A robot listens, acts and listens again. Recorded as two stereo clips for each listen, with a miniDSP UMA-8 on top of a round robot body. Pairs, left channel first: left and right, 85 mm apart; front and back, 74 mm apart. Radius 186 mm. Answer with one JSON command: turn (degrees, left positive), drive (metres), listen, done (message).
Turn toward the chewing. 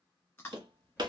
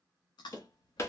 {"turn": 20}
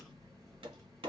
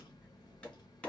{"listen": true}
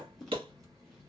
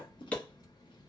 {"done": "Facing the chewing."}